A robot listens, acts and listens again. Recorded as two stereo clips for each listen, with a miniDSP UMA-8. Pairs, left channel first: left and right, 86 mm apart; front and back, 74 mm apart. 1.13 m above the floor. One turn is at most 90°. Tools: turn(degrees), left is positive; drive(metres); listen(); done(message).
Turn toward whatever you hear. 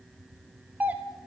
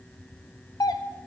turn(degrees=-20)
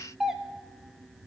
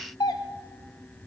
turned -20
done("Found it: a doorbell, straight ahead, under 1 m away.")